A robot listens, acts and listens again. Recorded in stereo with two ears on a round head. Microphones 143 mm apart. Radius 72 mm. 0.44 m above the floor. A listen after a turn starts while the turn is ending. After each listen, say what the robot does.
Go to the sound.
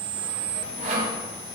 Turn 55° right.
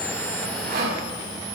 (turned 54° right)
Turn 70° right.
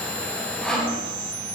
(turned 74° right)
Drive 1.0 m forward.
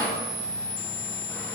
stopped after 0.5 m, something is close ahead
Turn 15° left.
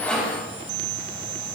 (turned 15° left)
Keep listening.
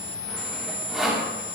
Something is in my way. I am facing the sawing but have not reached it.